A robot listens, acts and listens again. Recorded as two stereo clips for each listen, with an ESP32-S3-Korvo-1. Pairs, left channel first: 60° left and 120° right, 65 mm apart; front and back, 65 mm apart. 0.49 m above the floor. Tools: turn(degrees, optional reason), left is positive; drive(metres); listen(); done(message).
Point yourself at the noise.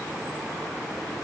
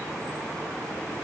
listen()
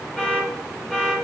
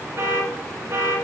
turn(degrees=140, reason="The alarm: 140° left.")
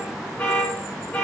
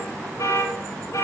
turn(degrees=-10, reason="The alarm is now 10° right.")
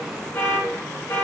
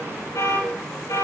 done("Found it: an alarm, straight ahead, 2 to 4 m away.")